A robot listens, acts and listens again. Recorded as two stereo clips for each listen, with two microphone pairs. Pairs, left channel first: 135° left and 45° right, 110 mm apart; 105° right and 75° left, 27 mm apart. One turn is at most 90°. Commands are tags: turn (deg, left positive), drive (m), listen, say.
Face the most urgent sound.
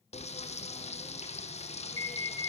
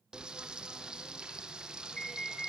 <turn deg="-45"/>
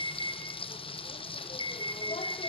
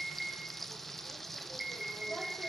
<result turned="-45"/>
<say>Facing the alarm, over 4 m away.</say>